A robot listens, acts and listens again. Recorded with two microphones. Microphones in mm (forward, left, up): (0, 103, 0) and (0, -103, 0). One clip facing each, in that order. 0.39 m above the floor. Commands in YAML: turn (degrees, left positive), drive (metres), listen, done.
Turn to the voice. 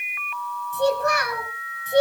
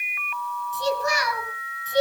turn: 55
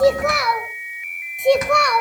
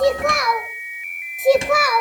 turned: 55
done: "Facing the child speaking."